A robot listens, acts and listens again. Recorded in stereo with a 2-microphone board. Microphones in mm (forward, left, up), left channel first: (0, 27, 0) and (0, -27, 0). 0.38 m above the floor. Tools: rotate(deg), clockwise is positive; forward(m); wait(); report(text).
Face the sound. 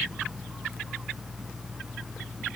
wait()
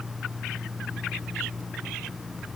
wait()
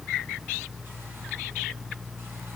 report("I can't make out anything.")